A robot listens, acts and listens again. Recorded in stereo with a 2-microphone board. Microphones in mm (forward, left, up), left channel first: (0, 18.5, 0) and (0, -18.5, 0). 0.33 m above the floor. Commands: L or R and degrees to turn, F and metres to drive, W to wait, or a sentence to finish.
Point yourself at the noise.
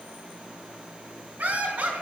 R40
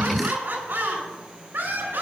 R110
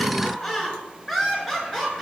Facing the laughter, over 4 m away.